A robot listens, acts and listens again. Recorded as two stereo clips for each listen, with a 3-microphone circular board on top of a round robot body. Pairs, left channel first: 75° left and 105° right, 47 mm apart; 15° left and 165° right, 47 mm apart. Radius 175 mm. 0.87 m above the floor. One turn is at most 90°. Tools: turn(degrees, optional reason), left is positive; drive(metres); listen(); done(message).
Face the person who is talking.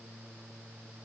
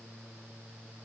listen()
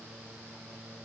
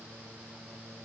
listen()
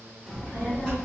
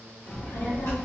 done("Found it: a child speaking, straight ahead, 2 to 4 m away.")